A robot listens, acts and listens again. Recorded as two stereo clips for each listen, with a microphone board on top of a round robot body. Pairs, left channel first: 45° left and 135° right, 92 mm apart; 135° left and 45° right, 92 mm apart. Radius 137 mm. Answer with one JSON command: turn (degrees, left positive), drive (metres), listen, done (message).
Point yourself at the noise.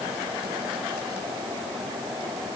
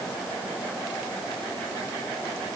{"listen": true}
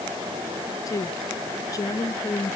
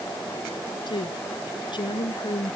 {"turn": 100}
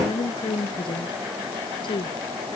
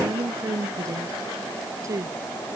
{"turn": 10}
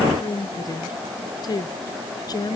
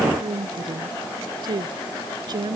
{"done": "Facing the woman speaking."}